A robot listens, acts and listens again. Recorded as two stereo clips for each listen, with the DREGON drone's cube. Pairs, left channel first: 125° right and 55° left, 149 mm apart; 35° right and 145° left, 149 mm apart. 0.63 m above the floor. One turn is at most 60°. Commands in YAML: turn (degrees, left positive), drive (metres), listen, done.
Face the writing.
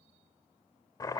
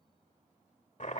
listen: true
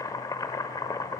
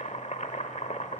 listen: true
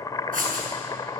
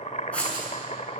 turn: 50
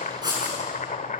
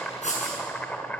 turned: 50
done: "Found it: writing, straight ahead."